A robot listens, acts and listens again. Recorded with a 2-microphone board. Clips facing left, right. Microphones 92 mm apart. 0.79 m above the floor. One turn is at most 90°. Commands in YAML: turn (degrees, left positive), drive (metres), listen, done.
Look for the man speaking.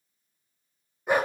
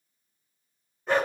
listen: true
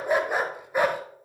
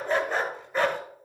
listen: true
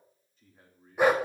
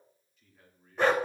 turn: 30
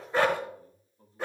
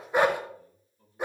turn: 35
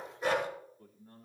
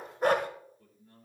turn: 90
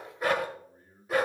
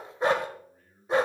turn: 30
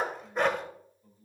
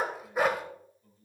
turn: 10
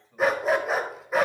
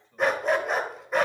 done: "Found it: a man speaking, straight ahead, 2 to 4 m away."